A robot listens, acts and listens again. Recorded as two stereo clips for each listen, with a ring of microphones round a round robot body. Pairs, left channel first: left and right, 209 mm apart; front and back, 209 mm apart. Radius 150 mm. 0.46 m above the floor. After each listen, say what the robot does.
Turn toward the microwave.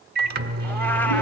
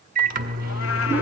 Turn 130° right.
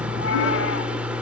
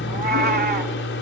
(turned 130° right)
Facing the microwave.